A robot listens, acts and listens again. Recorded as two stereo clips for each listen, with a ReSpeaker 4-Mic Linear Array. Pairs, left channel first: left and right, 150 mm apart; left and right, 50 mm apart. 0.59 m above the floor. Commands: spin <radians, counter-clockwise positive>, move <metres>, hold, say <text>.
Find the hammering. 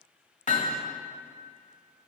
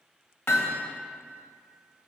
spin 0.96
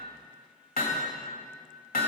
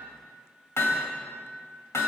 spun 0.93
spin 1.22
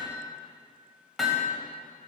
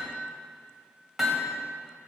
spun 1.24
say Found it: hammering, straight ahead, 1 to 2 m away.